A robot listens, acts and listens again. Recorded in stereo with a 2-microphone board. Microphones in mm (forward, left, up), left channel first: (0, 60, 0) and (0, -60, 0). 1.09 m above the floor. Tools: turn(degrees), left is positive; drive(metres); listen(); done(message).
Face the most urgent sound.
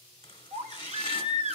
turn(degrees=-70)
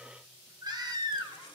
turn(degrees=-35)
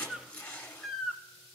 done("Found it: a baby crying, straight ahead.")